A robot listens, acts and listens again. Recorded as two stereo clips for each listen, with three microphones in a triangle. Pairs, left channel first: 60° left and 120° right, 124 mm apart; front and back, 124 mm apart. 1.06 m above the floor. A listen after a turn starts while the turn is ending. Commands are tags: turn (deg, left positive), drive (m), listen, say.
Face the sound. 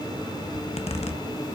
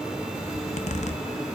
<turn deg="25"/>
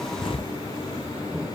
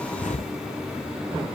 <turn deg="15"/>
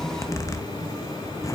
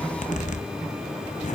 <say>Found it: a zipper, straight ahead, under 1 m away.</say>